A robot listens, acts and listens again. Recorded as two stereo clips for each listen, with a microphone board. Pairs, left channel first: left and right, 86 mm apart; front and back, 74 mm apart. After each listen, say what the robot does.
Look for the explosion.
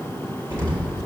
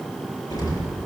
Turn 35° right.
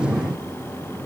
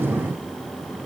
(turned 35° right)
I heard an explosion from this way, but can't make it out now.